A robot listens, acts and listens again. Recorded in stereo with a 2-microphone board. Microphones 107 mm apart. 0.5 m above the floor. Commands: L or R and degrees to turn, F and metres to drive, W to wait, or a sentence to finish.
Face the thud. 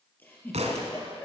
R90
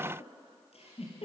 Facing where the thud came from. I can't hear it now.